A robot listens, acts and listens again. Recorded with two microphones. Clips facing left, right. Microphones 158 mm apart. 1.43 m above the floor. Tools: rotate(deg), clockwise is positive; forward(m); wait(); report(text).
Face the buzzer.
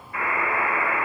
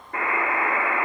rotate(55)
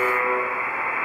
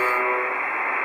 rotate(70)
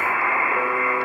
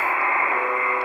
rotate(20)
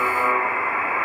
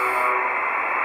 report("Found it: a buzzer, straight ahead, 1 to 2 m away.")